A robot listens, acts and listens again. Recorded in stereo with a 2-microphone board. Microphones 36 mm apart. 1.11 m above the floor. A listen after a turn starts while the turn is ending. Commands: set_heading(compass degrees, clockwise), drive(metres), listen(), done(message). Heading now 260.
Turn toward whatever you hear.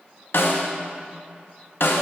set_heading(190)
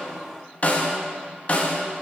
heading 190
set_heading(150)
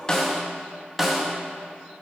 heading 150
done("Found it: a snare drum, straight ahead.")